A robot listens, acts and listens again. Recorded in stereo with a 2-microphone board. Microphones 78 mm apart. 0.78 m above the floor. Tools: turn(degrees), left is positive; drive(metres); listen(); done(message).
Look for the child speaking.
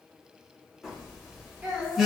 turn(degrees=-20)
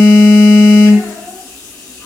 listen()
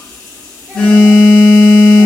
listen()
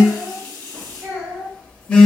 turn(degrees=-140)
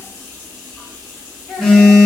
listen()
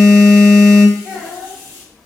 turn(degrees=15)
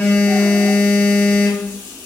listen()
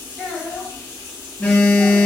done("Facing the child speaking.")